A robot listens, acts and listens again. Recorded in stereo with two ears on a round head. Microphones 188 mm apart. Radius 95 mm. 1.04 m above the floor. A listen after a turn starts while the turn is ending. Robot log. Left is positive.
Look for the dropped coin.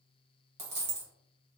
note: The dropped coin: about 30° right or 150° right.
cmd yaw -30
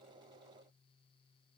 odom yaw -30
cmd idle
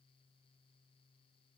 end: I heard a dropped coin, but can't make it out now. It was about straight ahead or 120° right.